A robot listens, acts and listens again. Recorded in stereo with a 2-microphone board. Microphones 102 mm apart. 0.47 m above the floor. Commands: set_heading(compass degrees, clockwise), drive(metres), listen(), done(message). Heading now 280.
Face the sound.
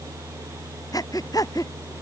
set_heading(245)
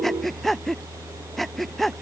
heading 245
done("Facing the breathing.")